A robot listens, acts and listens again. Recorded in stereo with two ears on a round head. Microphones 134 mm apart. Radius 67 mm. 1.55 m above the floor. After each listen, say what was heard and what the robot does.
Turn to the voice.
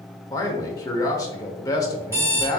The man speaking: about 25° left or 155° left. Turn 25° left.
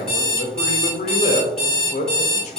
So it is at 130° left. Turn 130° left.
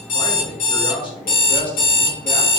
The man speaking is now 30° left. Turn 30° left.
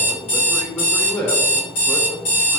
The man speaking is now 15° left. Turn 15° left.
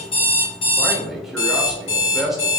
Facing the man speaking.